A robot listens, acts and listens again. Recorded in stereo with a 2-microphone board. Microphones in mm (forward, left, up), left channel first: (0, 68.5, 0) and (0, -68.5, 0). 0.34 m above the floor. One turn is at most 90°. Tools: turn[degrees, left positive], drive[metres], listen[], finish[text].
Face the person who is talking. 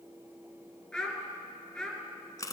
Action: turn[30]
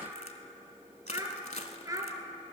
Thought: So it is at 25° right.
Action: turn[-25]
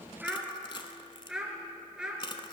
Action: finish[Found it: a child speaking, straight ahead, 2 to 4 m away.]